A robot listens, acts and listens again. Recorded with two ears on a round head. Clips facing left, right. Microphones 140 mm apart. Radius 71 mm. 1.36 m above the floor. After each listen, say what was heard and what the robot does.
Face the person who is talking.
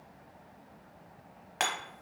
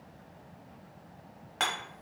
Keep listening.
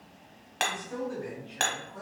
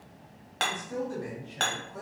The man speaking: about 25° right or 155° right. Turn 25° right.
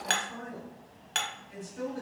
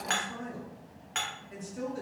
So it is at 130° right. Turn 130° right.
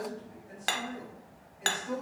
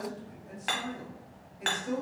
The man speaking is now 40° right. Turn 40° right.
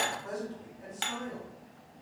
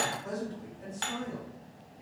The man speaking is now 10° right. Turn 10° right.
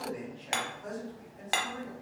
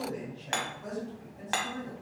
Facing the man speaking, 1 to 2 m away.